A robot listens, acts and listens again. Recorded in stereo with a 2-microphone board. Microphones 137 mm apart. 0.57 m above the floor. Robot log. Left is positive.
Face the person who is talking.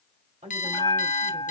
note: The woman speaking: about 55° right or 125° right.
cmd yaw -55
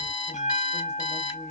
cmd idle
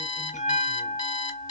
cmd idle
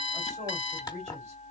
note: So it is at 65° right.
cmd yaw -65
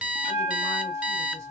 cmd idle
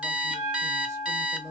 note: The woman speaking is now 25° right.
cmd yaw -25
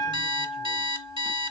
cmd idle
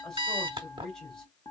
end: Found it: a woman speaking, straight ahead, 2 to 4 m away.